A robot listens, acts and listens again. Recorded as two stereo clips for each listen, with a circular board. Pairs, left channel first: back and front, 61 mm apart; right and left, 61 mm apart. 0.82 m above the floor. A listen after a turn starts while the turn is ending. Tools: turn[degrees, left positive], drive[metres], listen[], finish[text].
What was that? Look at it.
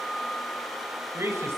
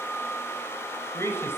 Thought: The man speaking: 45° right.
Action: turn[-45]
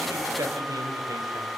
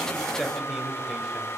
Action: finish[Facing the man speaking.]